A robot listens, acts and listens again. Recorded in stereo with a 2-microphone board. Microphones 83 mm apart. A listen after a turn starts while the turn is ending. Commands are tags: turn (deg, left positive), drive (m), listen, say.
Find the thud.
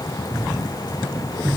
<turn deg="-65"/>
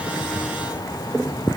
<listen/>
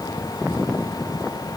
<say>I heard a thud, but can't make it out now. It was about straight ahead or 50° right.</say>